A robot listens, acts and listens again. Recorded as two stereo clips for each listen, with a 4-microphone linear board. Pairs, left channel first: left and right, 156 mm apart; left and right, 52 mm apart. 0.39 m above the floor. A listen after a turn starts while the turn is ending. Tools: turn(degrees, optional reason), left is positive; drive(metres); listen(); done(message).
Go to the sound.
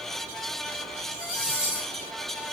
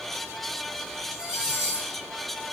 turn(degrees=60, reason="The cutlery clinking: about 60° left or 120° left.")
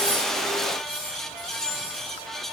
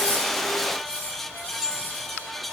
turn(degrees=55, reason="So it is at 55° left.")
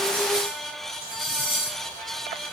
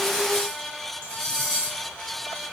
turn(degrees=20, reason="The cutlery clinking is now 20° left.")
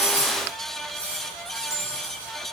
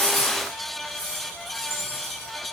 drive(metres=1.0)
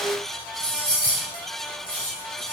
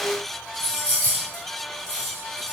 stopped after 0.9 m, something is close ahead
done("I am next to the cutlery clinking.")